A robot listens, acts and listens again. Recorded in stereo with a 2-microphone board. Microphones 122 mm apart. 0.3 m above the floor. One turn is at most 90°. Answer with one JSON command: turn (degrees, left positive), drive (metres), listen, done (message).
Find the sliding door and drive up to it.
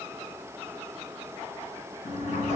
{"turn": 60}
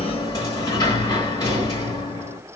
{"turn": 35}
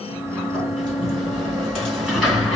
{"drive": 1.0}
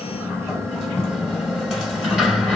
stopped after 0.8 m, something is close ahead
{"done": "Arrived at the sliding door, straight ahead."}